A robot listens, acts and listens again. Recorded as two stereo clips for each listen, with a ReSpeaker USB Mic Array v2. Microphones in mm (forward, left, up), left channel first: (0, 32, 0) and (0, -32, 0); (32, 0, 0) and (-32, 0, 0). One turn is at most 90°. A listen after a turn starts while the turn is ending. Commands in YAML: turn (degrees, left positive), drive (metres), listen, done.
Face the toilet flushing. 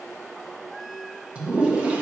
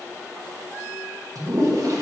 turn: -90
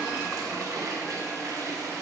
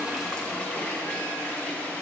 turn: -70
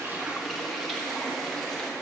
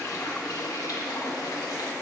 done: "Found it: a toilet flushing, straight ahead."